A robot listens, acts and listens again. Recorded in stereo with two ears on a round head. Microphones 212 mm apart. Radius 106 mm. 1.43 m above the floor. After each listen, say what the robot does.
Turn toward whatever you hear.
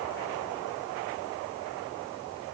Keep listening.
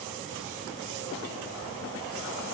Keep listening.
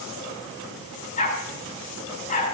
Turn 30° left.
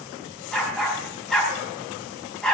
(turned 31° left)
Found it: a dog barking, straight ahead, over 4 m away.